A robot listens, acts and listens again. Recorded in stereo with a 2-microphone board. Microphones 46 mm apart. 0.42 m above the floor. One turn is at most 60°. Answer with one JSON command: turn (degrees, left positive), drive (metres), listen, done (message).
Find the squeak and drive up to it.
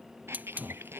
{"turn": -60}
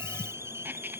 {"listen": true}
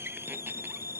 {"listen": true}
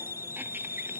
{"done": "I heard a squeak, but can't make it out now. It was about 15° right or 45° right. I did not reach it."}